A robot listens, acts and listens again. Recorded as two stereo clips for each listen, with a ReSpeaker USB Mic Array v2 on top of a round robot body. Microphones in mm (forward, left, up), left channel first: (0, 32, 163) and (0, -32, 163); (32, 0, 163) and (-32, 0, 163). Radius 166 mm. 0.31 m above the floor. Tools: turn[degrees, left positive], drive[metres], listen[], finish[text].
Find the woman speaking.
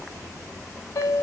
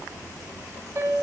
Action: listen[]
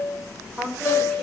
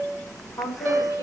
Action: finish[Facing the woman speaking, 2 to 4 m away.]